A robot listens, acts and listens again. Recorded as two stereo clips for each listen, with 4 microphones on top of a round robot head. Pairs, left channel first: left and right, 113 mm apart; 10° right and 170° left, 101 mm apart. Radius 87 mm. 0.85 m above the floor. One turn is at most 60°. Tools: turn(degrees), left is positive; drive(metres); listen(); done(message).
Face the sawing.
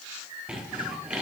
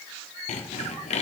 turn(degrees=-10)
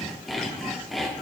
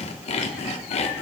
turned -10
done("Found it: sawing, straight ahead, 1 to 2 m away.")